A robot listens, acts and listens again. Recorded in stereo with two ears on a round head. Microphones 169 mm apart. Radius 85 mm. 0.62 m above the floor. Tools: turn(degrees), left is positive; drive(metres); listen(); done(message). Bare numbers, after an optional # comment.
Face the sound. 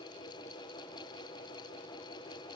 listen()
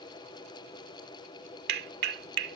# The clap: about 60° right or 120° right.
turn(-60)
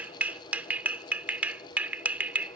# So it is at 10° right.
turn(-10)
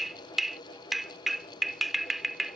done("Found it: a clap, straight ahead.")